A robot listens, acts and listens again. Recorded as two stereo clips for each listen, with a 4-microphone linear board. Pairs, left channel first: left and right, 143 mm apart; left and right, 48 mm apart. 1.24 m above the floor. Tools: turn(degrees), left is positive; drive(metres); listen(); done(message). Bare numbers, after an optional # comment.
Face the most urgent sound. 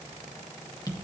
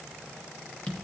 listen()
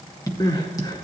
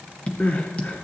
# The crying: about 35° left or 145° left.
turn(35)
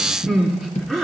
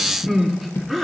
done("Found it: crying, straight ahead, 1 to 2 m away.")